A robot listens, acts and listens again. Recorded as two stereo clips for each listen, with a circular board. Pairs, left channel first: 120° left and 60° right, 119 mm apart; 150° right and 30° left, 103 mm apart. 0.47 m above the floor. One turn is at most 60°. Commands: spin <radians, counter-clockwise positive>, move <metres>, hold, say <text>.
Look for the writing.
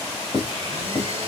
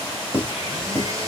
spin 1.05
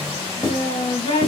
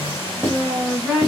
spin 1.05
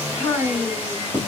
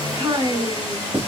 spin 0.61
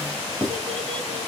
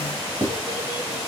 say Facing the writing.